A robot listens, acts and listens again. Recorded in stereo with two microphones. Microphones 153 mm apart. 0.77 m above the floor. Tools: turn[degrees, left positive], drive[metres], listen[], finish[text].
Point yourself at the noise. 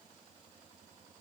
Action: listen[]
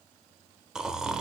Action: turn[-30]
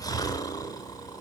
Thought: So it is at 25° left.
Action: turn[25]
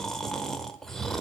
Action: finish[Found it: snoring, straight ahead, under 1 m away.]